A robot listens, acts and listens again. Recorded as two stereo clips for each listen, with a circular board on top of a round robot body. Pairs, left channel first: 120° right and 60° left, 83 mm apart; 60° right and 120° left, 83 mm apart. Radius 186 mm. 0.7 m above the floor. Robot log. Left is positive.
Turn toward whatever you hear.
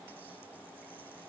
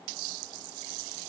cmd idle
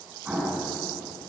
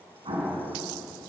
note: The explosion: 140° left.
cmd yaw +140
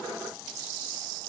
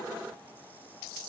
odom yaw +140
end: Facing where the explosion came from. I can't hear it now.